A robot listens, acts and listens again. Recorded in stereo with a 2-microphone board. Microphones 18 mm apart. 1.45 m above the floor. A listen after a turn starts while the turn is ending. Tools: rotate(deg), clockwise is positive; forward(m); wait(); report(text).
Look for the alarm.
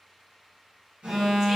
rotate(75)
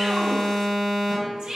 rotate(15)
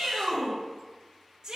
wait()
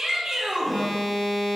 report("Facing the alarm.")